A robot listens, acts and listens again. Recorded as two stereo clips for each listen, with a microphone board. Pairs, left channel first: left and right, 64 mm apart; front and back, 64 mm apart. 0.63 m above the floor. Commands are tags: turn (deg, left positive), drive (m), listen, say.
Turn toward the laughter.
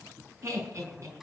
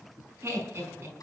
<turn deg="-130"/>
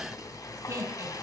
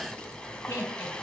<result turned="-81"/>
<turn deg="-50"/>
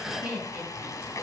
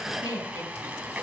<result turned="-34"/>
<turn deg="-20"/>
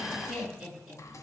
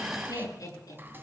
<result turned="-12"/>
<say>Found it: laughter, straight ahead, over 4 m away.</say>